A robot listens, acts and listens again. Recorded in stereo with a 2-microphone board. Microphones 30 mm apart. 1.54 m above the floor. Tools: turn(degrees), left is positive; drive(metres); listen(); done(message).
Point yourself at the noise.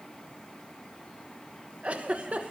turn(degrees=-50)
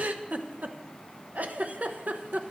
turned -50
turn(degrees=-70)
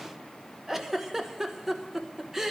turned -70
turn(degrees=-10)
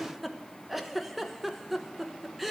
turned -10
done("Found it: a giggle, straight ahead.")